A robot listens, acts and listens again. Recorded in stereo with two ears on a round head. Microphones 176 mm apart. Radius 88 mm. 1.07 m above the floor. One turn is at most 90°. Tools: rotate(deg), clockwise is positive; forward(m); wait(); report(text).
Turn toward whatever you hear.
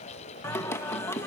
rotate(-30)
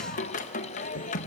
rotate(-90)
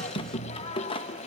rotate(-30)
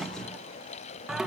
report("Found it: singing, straight ahead.")